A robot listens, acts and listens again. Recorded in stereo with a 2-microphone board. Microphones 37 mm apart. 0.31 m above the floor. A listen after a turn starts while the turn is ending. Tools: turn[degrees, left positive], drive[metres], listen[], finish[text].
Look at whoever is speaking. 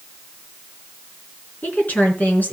Thought: The woman speaking: about 55° left or 125° left.
Action: turn[55]
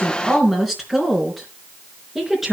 Action: finish[Found it: a woman speaking, straight ahead.]